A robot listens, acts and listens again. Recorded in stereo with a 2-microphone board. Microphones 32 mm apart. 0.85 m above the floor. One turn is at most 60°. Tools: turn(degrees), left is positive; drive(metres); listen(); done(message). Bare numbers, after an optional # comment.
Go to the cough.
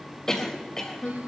# The cough: about 20° left or 160° left.
turn(20)
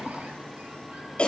# So it is at 145° left.
turn(60)
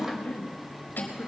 # The cough is now 85° left.
turn(60)
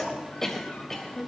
# The cough is now 15° left.
turn(15)
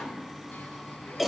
drive(1.0)
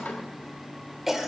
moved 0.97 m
# The cough is now 10° right.
turn(-10)
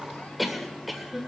drive(1.0)
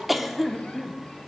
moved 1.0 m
drive(1.0)
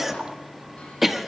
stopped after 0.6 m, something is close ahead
# The cough is now 10° right.
turn(-10)
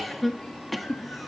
done("Arrived at the cough, straight ahead.")